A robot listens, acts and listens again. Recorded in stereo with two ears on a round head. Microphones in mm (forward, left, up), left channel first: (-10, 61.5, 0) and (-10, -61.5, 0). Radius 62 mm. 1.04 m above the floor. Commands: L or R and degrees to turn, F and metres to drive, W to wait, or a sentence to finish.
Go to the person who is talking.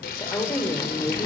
L20
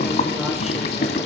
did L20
W
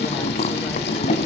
W
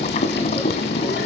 I heard a woman speaking, but can't make it out now. It was about straight ahead or 140° left. I did not reach it.